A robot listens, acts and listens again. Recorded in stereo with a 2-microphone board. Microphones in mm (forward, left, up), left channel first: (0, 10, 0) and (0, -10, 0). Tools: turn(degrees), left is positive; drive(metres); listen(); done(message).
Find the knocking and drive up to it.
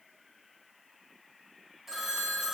listen()
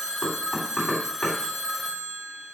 turn(degrees=30)
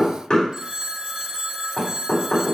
turn(degrees=140)
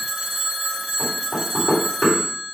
turn(degrees=15)
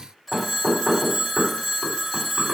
drive(metres=1.0)
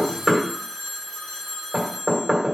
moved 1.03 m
turn(degrees=-10)
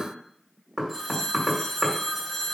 drive(metres=1.0)
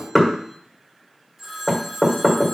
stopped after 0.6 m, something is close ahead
done("Arrived at the knocking, straight ahead.")